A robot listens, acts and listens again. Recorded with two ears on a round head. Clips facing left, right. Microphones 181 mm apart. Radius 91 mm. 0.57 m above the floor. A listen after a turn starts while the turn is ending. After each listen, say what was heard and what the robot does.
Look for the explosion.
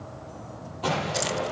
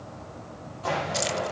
Turn 90° left.
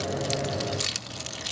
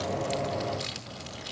I heard an explosion from this way, but can't make it out now.